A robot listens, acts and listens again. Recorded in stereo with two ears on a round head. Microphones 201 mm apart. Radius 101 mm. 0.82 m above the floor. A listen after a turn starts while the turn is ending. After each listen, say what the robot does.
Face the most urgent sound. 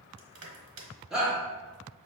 Turn 30° right.
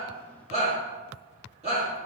Turn 145° right.
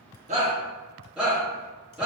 Found it: a shout, straight ahead.